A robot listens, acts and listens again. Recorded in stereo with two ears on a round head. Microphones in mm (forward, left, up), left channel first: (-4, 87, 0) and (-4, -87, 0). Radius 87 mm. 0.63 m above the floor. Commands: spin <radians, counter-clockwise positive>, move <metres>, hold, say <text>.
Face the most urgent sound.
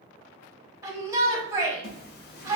spin -0.26
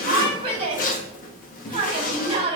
spin -2.62
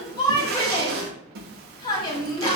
spin 0.44
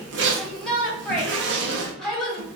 say Facing the shout.